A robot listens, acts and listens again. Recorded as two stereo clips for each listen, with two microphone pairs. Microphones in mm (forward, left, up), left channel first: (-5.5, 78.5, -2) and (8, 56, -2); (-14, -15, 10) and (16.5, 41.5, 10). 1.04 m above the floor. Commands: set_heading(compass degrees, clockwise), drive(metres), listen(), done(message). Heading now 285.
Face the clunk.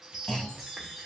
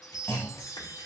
set_heading(100)
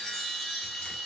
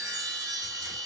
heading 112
set_heading(97)
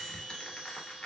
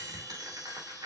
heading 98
done("Facing where the clunk came from. I can't hear it now.")